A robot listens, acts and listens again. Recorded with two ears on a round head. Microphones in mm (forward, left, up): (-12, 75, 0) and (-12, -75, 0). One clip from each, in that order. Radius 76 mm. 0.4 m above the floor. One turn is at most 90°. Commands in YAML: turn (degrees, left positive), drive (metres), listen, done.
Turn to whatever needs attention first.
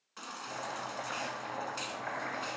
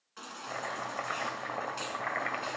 turn: 15
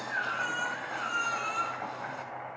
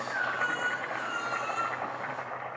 turn: 90
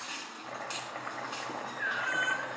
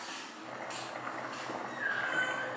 turn: 40
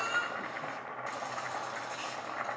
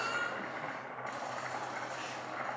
turn: 25
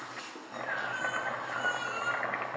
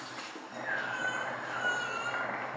done: "Found it: a baby crying, straight ahead, 1 to 2 m away."